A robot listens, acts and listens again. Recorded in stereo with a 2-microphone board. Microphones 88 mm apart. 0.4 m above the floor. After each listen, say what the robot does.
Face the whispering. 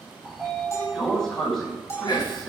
Turn 50° left.
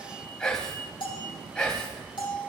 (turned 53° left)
Turn 10° left.
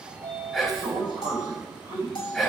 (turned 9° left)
Found it: whispering, straight ahead.